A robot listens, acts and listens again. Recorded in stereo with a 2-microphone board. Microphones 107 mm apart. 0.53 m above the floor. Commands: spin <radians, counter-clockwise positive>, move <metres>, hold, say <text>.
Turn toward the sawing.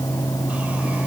hold
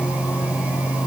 hold
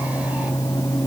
say I can't make out sawing to turn to.